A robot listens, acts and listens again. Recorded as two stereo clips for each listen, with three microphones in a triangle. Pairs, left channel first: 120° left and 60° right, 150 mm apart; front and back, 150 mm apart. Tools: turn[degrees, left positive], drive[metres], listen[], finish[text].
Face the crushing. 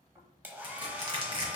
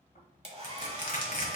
Thought: The crushing: 10° right.
Action: turn[-10]
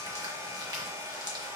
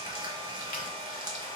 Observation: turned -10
Action: finish[Facing the crushing.]